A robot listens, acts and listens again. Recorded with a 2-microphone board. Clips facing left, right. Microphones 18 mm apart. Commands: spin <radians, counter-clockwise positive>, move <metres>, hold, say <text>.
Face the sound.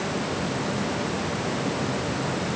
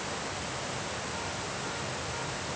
hold
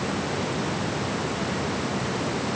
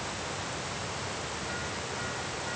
hold
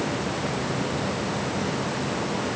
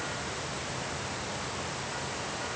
say I can't make out anything to turn to.